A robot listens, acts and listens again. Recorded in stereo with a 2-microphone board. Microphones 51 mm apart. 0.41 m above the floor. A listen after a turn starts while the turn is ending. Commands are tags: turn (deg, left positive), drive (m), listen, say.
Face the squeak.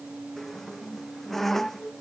<turn deg="30"/>
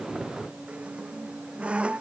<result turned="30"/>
<turn deg="-20"/>
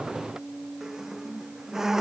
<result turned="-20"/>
<turn deg="-10"/>
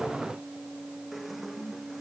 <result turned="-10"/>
<say>Facing the squeak.</say>